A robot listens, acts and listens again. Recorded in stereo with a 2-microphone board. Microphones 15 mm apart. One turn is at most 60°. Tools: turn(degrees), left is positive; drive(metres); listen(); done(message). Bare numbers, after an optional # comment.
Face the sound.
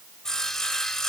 # The sawing: about 35° left or 145° left.
turn(35)
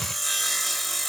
done("Found it: sawing, straight ahead, 1 to 2 m away.")